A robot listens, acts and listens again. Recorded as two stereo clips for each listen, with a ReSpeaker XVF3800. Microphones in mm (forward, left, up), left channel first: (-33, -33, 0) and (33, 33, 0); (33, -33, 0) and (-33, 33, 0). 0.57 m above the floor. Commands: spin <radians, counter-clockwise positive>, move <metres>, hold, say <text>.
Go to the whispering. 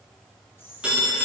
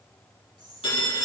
spin 2.88
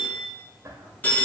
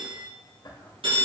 spin -0.17
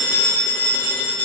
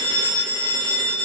hold
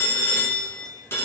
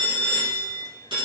hold
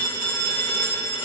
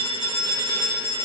say I heard whispering from this way, but can't make it out now. I did not reach it.